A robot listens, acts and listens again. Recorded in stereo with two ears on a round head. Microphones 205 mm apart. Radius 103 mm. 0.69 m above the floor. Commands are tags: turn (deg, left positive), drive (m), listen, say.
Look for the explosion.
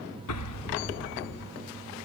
<turn deg="90"/>
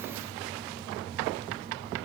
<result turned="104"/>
<turn deg="-15"/>
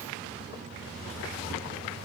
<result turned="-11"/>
<say>I heard an explosion from this way, but can't make it out now.</say>